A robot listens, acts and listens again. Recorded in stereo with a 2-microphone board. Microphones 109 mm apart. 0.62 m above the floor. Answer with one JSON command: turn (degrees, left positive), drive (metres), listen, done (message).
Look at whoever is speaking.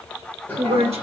{"turn": -65}
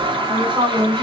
{"turn": -25}
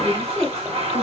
{"done": "Found it: a woman speaking, straight ahead."}